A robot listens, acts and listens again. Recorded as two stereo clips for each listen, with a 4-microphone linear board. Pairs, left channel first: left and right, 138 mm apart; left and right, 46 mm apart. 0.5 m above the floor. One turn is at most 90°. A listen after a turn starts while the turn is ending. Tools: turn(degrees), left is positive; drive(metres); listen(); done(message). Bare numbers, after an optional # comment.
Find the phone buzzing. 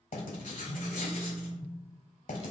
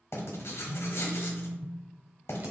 # The phone buzzing: about 45° right or 135° right.
turn(-45)
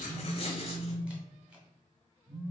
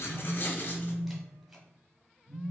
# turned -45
# So it is at 90° right.
turn(-90)
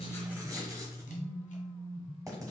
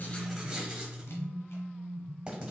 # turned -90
# The phone buzzing is now 20° right.
turn(-20)
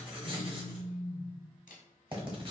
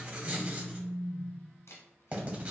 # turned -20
done("Facing the phone buzzing.")